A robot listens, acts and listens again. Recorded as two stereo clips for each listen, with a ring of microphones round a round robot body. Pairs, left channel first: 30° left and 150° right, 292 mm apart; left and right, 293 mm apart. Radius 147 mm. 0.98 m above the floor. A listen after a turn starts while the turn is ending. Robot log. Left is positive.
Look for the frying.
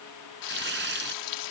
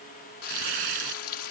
note: The frying: 45° left.
cmd yaw +45
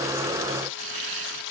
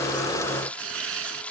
end: Facing the frying.